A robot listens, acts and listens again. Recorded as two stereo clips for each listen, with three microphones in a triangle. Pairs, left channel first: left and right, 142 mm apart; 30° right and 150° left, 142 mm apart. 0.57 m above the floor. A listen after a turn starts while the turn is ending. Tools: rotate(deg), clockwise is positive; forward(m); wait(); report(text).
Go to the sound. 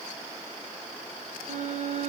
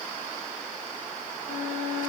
rotate(50)
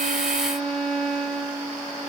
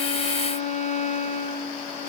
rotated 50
forward(1.0)
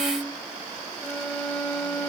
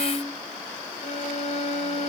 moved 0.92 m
forward(1.0)
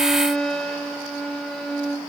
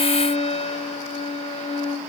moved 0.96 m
forward(1.0)
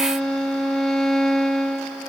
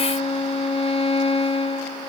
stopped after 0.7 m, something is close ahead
report("Arrived at the violin, straight ahead.")